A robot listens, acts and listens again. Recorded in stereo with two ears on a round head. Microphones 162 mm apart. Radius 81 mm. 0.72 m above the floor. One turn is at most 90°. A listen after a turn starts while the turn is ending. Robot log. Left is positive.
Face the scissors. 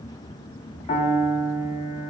cmd idle
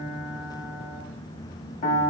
cmd idle
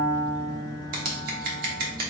note: The scissors: about 50° right or 130° right.
cmd yaw -50
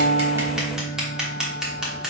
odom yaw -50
end: Facing the scissors, 1 to 2 m away.